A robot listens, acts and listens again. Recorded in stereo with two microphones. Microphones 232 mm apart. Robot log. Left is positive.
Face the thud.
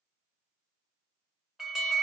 cmd idle
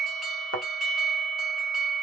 cmd yaw +90
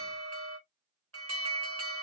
end: I heard a thud from this way, but can't make it out now.